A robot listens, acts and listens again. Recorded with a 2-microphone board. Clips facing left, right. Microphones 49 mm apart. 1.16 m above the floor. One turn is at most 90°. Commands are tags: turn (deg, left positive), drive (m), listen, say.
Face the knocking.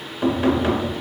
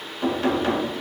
<turn deg="30"/>
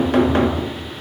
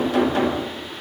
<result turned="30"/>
<turn deg="90"/>
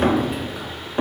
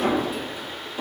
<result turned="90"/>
<turn deg="55"/>
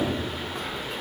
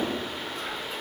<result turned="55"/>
<listen/>
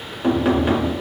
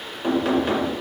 <turn deg="15"/>
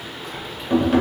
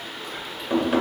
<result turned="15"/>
<say>Facing the knocking.</say>